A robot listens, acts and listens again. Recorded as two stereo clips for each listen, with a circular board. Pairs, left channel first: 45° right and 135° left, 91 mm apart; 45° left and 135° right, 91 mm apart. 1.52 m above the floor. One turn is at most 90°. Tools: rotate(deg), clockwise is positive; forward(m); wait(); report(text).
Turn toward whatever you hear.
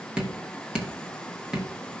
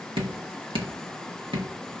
rotate(90)
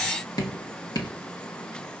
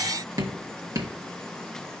rotate(85)
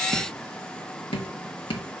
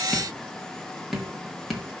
rotate(45)
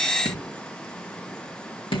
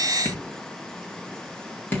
rotate(20)
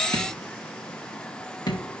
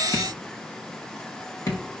report("Found it: dripping, straight ahead, 1 to 2 m away.")